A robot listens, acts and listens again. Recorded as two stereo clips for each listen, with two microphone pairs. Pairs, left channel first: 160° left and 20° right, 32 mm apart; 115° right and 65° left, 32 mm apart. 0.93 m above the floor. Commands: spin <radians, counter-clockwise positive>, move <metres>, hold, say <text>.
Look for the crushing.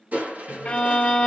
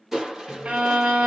spin -0.26
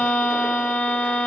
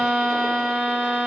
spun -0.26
hold
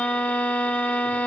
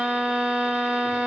hold
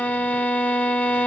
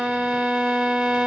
say Facing where the crushing came from. I can't hear it now.